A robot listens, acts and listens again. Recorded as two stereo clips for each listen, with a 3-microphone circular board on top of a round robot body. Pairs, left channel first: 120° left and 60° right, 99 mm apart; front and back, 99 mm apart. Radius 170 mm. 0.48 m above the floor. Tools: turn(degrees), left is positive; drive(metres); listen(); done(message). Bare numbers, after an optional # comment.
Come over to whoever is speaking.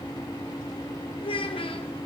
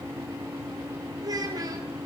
# The child speaking: 135° left.
turn(135)
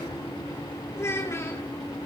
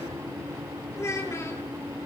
# The child speaking is now 60° left.
turn(60)
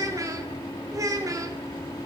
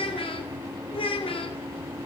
drive(1.0)
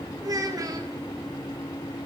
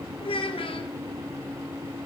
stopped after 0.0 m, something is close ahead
# The child speaking is now 10° right.
turn(-10)
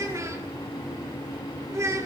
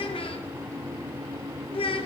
done("Blocked. The child speaking is further on, straight ahead.")